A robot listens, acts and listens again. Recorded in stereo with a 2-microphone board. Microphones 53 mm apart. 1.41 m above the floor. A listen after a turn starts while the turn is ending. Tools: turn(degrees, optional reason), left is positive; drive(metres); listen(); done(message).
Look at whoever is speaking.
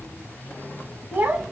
turn(degrees=-40, reason="The child speaking: about 40° right or 140° right.")
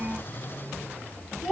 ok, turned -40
turn(degrees=-10, reason="So it is at 10° right.")
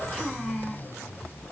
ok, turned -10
done("Found it: a child speaking, straight ahead, 1 to 2 m away.")